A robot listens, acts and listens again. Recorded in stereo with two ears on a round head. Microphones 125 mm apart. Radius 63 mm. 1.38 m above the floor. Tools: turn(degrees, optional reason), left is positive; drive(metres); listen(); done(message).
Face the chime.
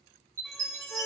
turn(degrees=-20, reason="The chime: about 20° right or 160° right.")
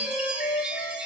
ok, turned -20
turn(degrees=-10, reason="So it is at 10° right.")
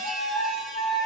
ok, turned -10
listen()
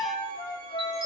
listen()
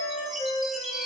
done("Facing the chime, 1 to 2 m away.")